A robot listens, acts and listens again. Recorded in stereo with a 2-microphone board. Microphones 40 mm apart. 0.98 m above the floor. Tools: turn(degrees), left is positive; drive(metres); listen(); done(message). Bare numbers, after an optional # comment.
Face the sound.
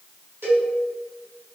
turn(-90)
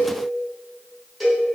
done("Found it: a cowbell, straight ahead.")